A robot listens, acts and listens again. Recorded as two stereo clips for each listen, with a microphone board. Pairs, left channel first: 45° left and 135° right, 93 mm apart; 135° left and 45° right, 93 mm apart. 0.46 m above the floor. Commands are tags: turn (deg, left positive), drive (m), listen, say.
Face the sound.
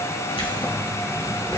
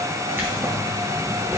<turn deg="15"/>
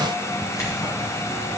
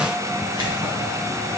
<turn deg="-10"/>
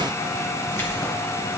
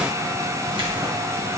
<turn deg="-15"/>
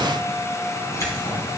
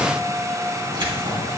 <turn deg="-10"/>
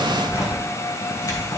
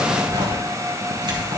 <say>Facing the keys jangling, 2 to 4 m away.</say>